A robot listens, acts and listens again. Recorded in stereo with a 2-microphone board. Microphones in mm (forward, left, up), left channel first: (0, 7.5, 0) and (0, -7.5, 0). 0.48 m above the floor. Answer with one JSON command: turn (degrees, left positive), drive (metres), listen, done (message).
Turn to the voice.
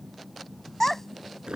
{"turn": 25}
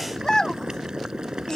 {"turn": 130}
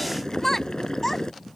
{"turn": 25}
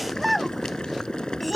{"done": "Facing the child speaking."}